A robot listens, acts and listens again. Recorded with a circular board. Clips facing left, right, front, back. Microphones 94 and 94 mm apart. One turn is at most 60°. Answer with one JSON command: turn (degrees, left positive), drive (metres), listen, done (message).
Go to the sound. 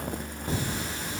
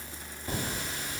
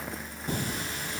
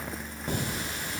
{"turn": 60}
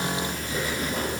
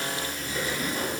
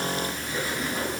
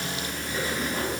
{"turn": 60}
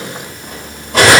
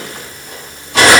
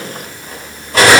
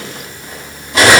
{"turn": 45}
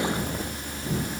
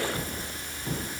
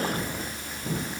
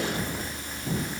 {"turn": 15}
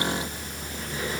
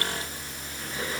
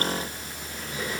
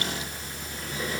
{"listen": true}
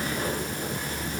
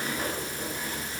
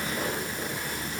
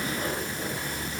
{"listen": true}
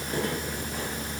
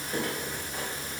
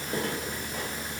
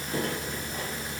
{"done": "I heard cutlery clinking from this way, but can't make it out now. I did not reach it."}